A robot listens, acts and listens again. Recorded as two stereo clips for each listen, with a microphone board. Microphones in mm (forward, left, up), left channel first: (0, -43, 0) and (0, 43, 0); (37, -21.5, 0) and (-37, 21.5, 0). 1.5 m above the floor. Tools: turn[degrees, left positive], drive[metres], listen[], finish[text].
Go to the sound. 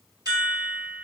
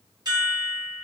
Thought: The chime: 120° left.
Action: turn[120]
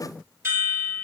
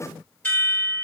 Thought: The chime is now 35° left.
Action: turn[35]
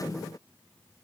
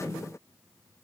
Action: listen[]
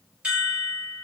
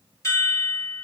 Thought: The chime is now 20° left.
Action: turn[20]
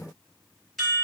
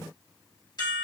Action: drive[1.0]
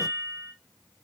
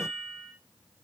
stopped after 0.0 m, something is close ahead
Action: finish[Blocked. The chime is further on, straight ahead.]